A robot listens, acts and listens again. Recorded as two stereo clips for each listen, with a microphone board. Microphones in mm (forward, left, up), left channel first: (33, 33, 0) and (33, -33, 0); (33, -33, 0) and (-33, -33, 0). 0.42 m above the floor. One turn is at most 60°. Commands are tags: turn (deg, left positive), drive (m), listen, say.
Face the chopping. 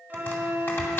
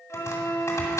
<turn deg="40"/>
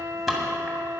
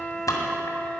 <say>Found it: chopping, straight ahead, 2 to 4 m away.</say>